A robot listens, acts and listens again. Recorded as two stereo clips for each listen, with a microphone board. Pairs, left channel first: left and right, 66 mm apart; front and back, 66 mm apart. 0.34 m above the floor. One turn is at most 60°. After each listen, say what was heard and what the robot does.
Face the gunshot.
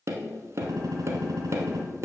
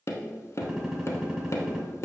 The gunshot: 100° right. Turn 60° right.
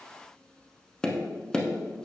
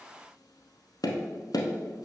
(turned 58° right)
Nothing new. It was at 45° right. Turn 45° right.
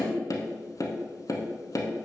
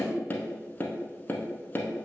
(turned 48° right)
Facing where the gunshot came from. I can't hear it now.